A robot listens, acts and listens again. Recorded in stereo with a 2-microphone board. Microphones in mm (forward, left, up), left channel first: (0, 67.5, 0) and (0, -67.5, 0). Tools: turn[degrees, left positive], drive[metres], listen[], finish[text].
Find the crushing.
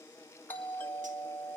Action: listen[]
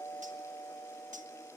Action: listen[]
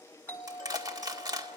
Thought: The crushing: about 30° right or 150° right.
Action: turn[-30]
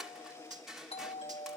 Action: finish[Facing the crushing.]